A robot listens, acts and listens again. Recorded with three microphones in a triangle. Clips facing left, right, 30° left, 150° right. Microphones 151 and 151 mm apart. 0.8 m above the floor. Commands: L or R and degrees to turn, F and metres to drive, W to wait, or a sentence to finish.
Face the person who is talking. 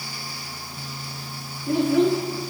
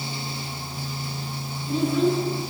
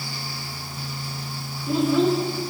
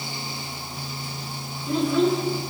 L120
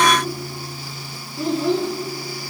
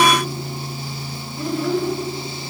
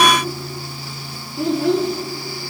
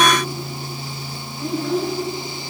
L25
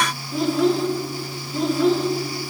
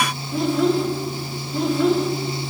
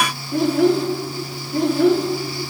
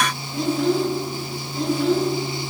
Found it: a child speaking, straight ahead, under 1 m away.